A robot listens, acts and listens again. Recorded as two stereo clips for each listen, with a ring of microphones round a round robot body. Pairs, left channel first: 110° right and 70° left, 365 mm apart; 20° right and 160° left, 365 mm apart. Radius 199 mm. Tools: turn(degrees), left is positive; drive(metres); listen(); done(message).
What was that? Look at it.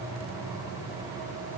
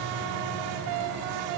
listen()
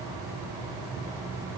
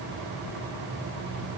listen()
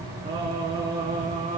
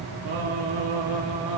turn(degrees=135)
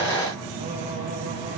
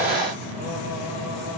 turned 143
listen()
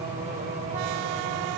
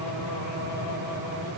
listen()
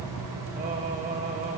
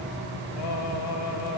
done("Facing the singing.")